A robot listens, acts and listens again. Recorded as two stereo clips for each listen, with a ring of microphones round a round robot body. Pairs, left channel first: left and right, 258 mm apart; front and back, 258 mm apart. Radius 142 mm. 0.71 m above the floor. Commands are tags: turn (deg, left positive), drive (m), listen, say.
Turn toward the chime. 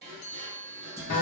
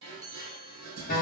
<turn deg="105"/>
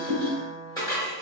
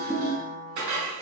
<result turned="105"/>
<listen/>
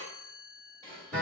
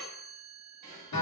<turn deg="50"/>
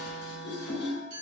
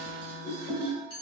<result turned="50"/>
<turn deg="-15"/>
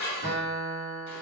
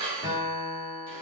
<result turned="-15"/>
<listen/>
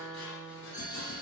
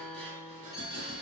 <listen/>
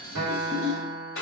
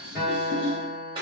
<say>Facing where the chime came from. I can't hear it now.</say>